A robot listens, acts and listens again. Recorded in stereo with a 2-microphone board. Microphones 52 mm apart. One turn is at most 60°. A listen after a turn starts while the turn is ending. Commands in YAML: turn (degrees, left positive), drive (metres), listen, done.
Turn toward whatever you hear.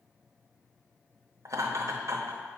turn: -60
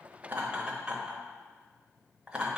turn: -20
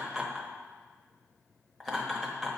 done: "Facing the laughter, under 1 m away."